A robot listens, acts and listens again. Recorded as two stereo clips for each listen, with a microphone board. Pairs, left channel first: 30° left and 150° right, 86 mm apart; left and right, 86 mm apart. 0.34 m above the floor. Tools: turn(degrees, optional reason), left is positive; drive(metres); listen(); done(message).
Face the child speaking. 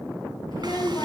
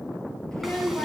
turn(degrees=10, reason="The child speaking: 10° left.")
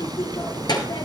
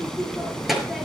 done("Found it: a child speaking, straight ahead.")